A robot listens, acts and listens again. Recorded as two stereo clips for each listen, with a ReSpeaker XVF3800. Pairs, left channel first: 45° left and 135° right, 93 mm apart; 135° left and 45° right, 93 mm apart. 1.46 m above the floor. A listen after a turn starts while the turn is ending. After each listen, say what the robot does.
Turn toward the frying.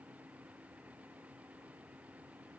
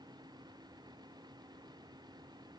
Keep listening.
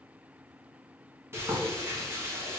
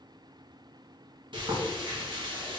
Turn 75° right.
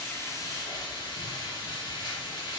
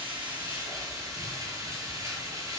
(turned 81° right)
Found it: frying, straight ahead, 1 to 2 m away.